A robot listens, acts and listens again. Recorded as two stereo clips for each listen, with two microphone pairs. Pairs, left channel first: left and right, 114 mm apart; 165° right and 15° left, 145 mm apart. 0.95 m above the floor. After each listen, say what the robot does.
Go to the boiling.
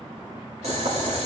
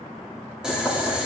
Turn 70° right.
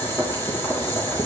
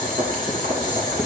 Turn 25° left.
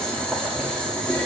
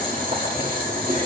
Turn 10° left.
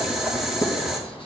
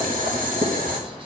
Drive 1.0 m forward.
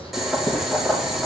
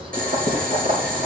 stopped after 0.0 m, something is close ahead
Blocked. The boiling is further on, straight ahead.